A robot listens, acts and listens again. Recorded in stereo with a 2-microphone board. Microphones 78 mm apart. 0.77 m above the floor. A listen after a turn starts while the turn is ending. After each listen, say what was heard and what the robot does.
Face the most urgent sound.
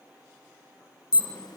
The alarm: about 55° left or 125° left. Turn 55° left.
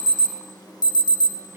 So it is at 60° left. Turn 60° left.
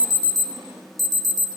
Facing the alarm, under 1 m away.